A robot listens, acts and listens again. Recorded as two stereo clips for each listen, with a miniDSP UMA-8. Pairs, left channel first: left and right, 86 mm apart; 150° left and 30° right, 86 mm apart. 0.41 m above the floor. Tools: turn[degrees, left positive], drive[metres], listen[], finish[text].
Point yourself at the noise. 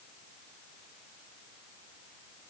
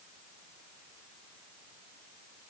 Action: listen[]
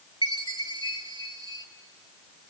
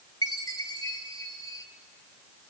Thought: The chime: 110° left.
Action: turn[110]
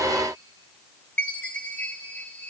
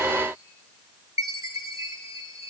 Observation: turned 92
Thought: The chime is now 20° left.
Action: turn[20]
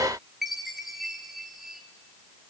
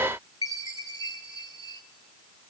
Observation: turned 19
Action: finish[Facing the chime.]